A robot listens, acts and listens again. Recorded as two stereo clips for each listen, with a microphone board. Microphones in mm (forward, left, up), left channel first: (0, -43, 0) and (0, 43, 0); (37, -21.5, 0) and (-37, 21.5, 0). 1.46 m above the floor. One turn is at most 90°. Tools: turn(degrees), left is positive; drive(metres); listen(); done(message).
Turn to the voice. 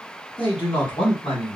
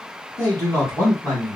turn(degrees=-90)
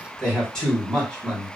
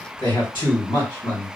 done("Found it: a man speaking, straight ahead.")